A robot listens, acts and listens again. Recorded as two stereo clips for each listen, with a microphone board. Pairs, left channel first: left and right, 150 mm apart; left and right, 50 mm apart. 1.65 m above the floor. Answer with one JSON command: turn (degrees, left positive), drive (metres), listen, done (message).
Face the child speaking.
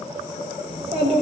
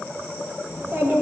{"turn": -40}
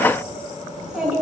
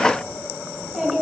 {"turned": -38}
{"done": "Found it: a child speaking, straight ahead, over 4 m away."}